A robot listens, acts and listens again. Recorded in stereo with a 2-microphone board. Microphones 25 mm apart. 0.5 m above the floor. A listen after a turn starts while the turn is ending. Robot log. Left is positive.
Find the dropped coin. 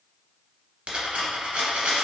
note: The dropped coin: about 60° right or 120° right.
cmd yaw -60
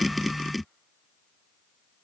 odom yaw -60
cmd idle
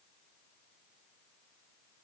end: I heard a dropped coin, but can't make it out now. It was about straight ahead or 60° right.